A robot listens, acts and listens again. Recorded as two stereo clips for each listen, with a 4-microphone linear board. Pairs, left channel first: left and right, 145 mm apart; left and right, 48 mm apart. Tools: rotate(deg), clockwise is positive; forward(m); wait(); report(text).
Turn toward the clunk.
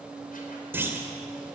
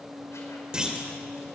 rotate(30)
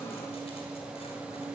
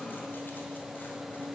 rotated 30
wait()
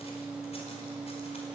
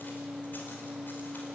report("I heard a clunk, but can't make it out now. It was about 15° left or 135° right.")